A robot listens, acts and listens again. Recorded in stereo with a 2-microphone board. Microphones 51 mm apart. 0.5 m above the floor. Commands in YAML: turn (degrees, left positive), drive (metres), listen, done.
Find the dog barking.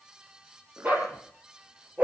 turn: -35
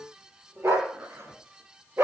turn: -125
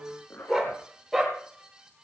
done: "Facing the dog barking, over 4 m away."